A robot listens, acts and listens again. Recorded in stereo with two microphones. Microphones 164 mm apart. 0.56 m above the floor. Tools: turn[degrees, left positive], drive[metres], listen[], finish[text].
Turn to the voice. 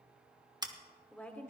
Action: turn[30]
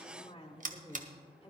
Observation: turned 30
Thought: So it is at 145° left.
Action: turn[145]
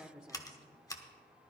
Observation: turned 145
Action: finish[Facing the woman speaking.]